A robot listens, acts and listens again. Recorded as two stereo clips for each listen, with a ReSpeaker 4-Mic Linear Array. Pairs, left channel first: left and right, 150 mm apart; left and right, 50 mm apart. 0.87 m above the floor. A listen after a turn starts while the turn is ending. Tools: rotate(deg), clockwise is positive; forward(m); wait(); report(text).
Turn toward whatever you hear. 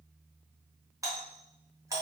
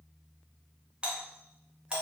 rotate(20)
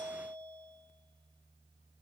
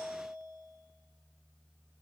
wait()
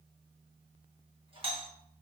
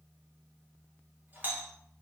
rotate(135)
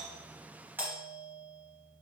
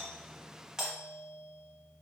rotate(15)
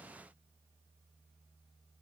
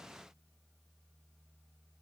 wait()
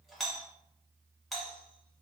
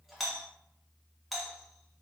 report("Found it: a doorbell, straight ahead, 1 to 2 m away.")